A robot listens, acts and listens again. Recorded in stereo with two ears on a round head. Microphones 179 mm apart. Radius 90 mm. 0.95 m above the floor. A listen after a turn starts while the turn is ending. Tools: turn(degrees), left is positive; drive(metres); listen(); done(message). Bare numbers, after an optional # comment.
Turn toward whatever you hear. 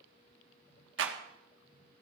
# The clap: about 65° right or 115° right.
turn(-65)
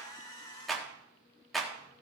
done("Facing the clap, 1 to 2 m away.")